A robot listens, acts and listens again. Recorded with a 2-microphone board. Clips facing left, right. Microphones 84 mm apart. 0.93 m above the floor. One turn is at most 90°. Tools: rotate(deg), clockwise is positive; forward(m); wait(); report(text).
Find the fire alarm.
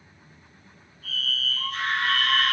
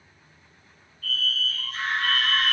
rotate(-25)
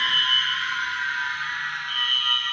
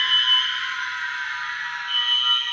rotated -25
rotate(-90)
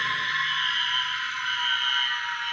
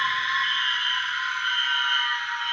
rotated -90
rotate(-10)
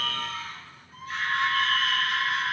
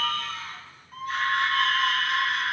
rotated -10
report("Facing the fire alarm, over 4 m away.")